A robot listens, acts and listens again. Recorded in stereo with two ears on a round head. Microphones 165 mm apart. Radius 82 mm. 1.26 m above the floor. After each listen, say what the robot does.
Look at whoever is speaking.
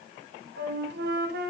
Keep listening.
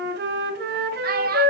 Turn 50° right.
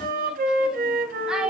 Facing the child speaking, 1 to 2 m away.